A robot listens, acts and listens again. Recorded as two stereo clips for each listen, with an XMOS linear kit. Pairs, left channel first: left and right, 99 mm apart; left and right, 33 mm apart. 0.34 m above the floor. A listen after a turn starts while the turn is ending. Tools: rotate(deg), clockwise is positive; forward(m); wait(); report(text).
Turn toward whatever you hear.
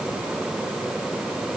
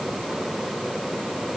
wait()
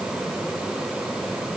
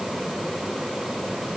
wait()
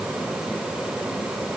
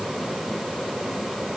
report("I can't make out anything to turn to.")